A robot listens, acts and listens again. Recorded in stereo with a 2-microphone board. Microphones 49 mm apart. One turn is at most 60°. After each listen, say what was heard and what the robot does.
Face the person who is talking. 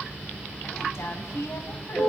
The woman speaking: about 70° left or 110° left. Turn 60° left.
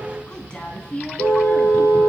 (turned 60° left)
So it is at 25° left. Turn 25° left.
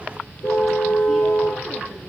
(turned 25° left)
Keep listening.
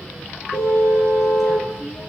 Keep listening.
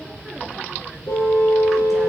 Facing where the woman speaking came from. I can't hear it now.